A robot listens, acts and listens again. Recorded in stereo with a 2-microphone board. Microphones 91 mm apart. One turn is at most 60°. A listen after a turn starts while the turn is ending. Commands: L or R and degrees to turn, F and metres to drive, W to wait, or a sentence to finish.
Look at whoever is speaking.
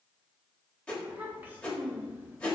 R20
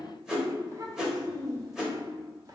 R60
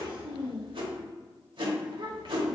R60
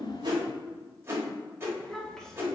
Found it: a child speaking, straight ahead.